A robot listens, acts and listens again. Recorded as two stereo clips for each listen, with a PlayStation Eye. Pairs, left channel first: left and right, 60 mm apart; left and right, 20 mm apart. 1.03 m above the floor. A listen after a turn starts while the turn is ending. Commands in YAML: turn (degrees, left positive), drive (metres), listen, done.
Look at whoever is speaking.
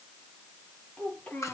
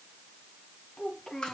turn: 30
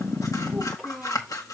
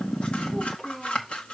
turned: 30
done: "Found it: a child speaking, straight ahead."